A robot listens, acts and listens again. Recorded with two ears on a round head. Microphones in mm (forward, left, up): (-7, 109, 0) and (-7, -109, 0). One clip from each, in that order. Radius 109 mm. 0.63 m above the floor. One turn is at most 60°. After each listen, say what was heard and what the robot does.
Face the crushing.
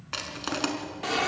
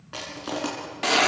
The crushing: about 60° left or 120° left. Turn 60° left.
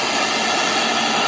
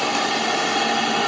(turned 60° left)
Keep listening.
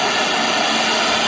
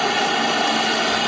Keep listening.
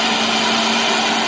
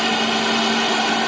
I heard crushing, but can't make it out now. It was about straight ahead or 60° left.